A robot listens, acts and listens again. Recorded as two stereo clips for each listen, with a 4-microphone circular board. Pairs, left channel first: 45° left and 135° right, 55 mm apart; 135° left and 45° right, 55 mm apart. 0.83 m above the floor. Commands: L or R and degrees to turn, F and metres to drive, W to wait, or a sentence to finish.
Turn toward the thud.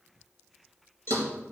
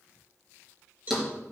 R130
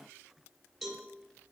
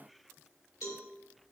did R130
Facing where the thud came from. I can't hear it now.